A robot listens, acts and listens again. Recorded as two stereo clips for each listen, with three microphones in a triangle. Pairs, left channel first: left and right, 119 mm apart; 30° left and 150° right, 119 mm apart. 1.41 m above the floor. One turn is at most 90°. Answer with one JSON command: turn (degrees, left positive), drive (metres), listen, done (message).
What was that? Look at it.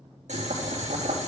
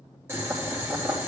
{"turn": -80}
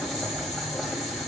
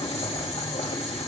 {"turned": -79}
{"done": "Facing the boiling."}